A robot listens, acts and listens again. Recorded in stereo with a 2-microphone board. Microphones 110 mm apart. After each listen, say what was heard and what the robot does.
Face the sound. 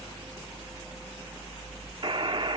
The buzzer: about 50° right or 130° right. Turn 50° right.
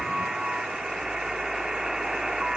Found it: a buzzer, straight ahead.